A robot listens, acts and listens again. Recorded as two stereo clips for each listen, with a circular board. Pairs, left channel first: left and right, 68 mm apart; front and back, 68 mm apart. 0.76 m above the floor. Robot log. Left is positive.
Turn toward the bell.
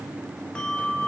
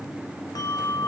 note: The bell: 20° left.
cmd yaw +20
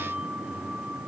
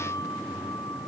cmd idle
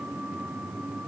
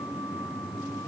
cmd idle
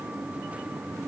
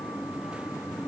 end: I heard a bell from this way, but can't make it out now.